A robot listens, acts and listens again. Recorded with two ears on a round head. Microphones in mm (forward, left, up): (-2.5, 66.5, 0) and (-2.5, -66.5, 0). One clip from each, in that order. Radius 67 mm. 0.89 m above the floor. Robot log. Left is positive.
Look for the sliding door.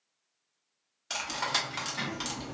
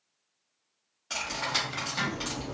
cmd yaw -30
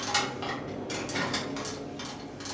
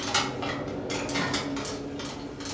note: So it is at 140° right.
cmd yaw -140
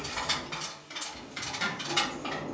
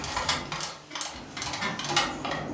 note: The sliding door is now 20° right.
cmd yaw -20
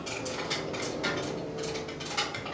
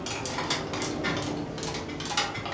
end: Found it: a sliding door, straight ahead.